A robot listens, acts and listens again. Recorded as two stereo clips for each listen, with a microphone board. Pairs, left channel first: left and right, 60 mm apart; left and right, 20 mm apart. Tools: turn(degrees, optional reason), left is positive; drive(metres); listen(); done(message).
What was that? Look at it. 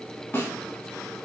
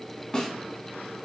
turn(degrees=40, reason="The snare drum: about 40° left or 140° left.")
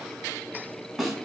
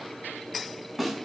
done("Found it: a snare drum, straight ahead.")